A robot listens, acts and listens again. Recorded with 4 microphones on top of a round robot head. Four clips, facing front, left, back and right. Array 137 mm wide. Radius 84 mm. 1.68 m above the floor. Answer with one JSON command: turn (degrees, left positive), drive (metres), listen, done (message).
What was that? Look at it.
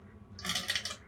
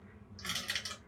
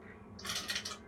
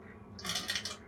{"turn": -35}
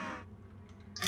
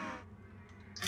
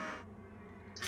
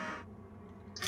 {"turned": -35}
{"done": "Found it: crushing, straight ahead, 1 to 2 m away."}